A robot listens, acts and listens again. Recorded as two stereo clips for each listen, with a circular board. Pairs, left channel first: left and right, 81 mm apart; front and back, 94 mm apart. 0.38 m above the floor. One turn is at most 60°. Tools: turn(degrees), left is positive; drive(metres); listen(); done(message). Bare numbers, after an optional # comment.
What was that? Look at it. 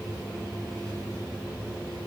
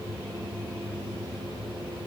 listen()
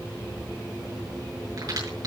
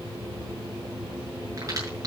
# The crack: 125° right.
turn(-60)
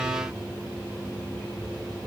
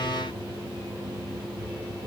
# Nothing new. It was at 65° right.
turn(-60)
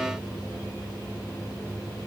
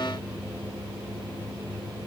done("Facing where the crack came from. I can't hear it now.")